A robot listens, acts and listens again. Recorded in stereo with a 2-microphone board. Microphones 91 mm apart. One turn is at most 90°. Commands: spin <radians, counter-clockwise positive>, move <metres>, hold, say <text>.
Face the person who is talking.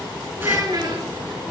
spin -0.79
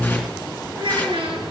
spin -1.57
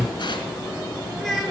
say Found it: a child speaking, straight ahead.